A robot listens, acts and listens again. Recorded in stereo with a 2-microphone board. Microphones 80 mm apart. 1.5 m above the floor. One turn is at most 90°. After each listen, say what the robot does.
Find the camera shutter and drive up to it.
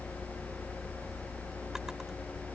Keep listening.
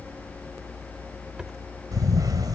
Turn 55° right.
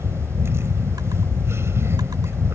Turn 45° right.
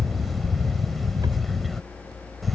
Drive 1.0 m forward.
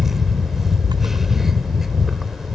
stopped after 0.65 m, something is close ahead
Arrived at the camera shutter, straight ahead.